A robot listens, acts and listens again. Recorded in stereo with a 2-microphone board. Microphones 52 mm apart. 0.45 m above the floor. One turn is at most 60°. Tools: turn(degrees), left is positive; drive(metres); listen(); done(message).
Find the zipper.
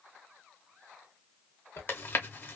turn(degrees=55)
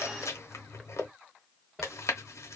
done("Found it: a zipper, straight ahead.")